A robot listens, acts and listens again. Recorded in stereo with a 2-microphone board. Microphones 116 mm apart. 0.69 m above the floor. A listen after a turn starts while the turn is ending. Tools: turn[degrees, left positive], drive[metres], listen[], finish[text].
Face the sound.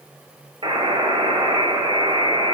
Thought: The buzzer: about 50° right or 130° right.
Action: turn[-50]
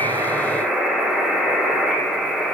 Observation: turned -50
Action: finish[Found it: a buzzer, straight ahead, 2 to 4 m away.]